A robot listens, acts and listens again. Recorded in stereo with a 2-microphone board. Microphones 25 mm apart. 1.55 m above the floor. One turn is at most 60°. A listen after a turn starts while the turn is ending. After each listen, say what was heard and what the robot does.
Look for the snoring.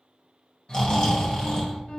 The snoring: about 40° left or 140° left. Turn 40° left.
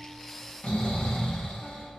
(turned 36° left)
So it is at 105° left. Turn 60° left.
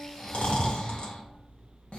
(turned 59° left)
The snoring is now 50° left. Turn 50° left.
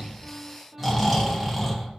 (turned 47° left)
Facing the snoring.